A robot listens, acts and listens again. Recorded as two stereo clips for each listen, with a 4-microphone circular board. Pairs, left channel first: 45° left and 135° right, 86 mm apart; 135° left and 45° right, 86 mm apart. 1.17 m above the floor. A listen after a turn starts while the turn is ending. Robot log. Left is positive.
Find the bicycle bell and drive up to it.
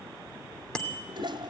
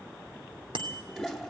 note: The bicycle bell: 35° right.
cmd yaw -35
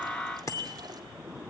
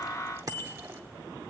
cmd fwd 1.0
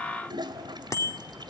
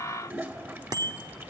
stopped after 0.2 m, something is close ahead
end: Blocked. The bicycle bell is further on, straight ahead.